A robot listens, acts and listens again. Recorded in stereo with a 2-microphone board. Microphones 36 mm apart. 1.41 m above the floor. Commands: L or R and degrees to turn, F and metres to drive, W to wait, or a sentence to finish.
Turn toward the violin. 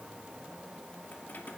W
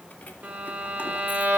R60
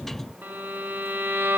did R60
R60
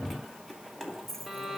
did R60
Facing the violin.